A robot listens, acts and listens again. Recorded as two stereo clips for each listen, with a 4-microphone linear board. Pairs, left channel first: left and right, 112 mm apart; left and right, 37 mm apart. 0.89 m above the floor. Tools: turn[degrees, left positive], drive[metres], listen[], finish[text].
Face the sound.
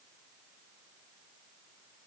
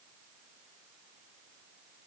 Action: listen[]
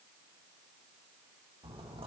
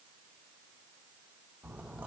Thought: The splash: about 50° right or 130° right.
Action: turn[-50]
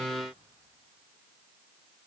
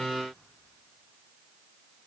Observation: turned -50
Action: listen[]
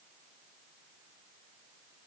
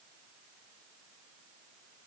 Action: finish[I heard a splash, but can't make it out now. It was about straight ahead or 80° right.]